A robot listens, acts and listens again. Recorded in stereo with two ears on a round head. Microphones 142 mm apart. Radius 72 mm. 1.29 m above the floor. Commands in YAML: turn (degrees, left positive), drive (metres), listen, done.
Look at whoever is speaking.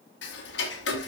listen: true
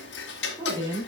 turn: -25
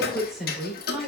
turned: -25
done: "Facing the woman speaking."